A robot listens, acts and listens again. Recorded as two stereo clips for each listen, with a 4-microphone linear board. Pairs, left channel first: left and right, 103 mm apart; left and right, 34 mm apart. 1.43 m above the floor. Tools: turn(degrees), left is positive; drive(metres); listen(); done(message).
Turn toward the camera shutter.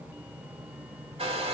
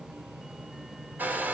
listen()
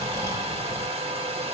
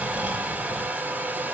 listen()
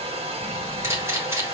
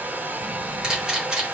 turn(degrees=-25)
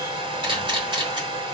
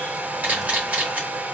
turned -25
turn(degrees=-130)
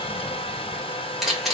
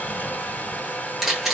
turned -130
done("Facing the camera shutter, 2 to 4 m away.")